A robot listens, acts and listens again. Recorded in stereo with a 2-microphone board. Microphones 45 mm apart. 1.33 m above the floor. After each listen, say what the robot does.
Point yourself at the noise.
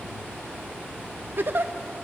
Turn 50° right.
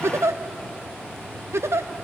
Turn 80° right.
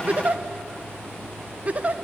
Turn 35° right.
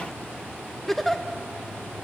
Facing the giggle.